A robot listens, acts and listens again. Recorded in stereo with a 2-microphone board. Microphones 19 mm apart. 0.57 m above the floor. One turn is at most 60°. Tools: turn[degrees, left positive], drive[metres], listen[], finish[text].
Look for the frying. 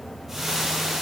Thought: The frying: about 25° right or 155° right.
Action: turn[-25]
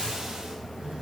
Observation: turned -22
Action: listen[]
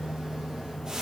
Action: listen[]
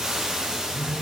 Thought: So it is at 135° right.
Action: turn[-60]
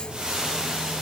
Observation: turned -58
Thought: The frying is now 75° right.
Action: turn[-60]
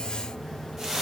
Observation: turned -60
Thought: The frying is now 15° right.
Action: turn[-15]
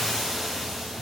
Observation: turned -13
Action: finish[Facing the frying.]